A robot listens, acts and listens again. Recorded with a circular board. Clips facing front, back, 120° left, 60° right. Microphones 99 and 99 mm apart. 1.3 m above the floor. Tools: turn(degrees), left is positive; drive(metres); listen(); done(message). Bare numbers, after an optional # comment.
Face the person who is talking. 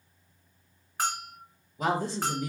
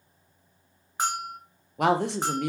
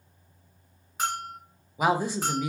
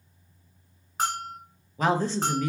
# The woman speaking: 160° right.
turn(-160)
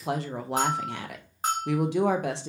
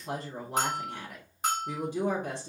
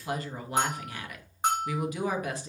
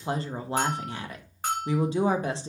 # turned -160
done("Facing the woman speaking.")